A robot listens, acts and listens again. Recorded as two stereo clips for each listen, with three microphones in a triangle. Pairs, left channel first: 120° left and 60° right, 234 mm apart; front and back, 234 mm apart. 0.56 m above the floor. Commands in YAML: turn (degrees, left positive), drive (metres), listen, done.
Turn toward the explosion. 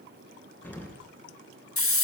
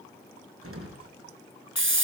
turn: -160
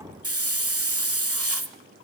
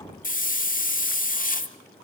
done: "Facing where the explosion came from. I can't hear it now."